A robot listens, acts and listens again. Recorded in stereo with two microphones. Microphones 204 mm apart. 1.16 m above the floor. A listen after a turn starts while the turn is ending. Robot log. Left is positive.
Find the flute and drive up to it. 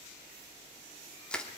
cmd idle
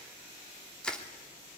cmd idle
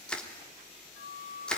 cmd yaw +90
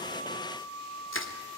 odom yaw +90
cmd fwd 1.0
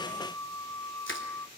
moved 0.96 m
note: The flute is now 15° left.
cmd yaw +15
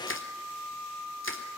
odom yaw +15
cmd fwd 1.0
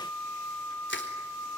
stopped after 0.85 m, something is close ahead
note: The flute is now 10° left.
cmd yaw +10
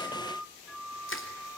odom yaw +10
end: I am next to the flute.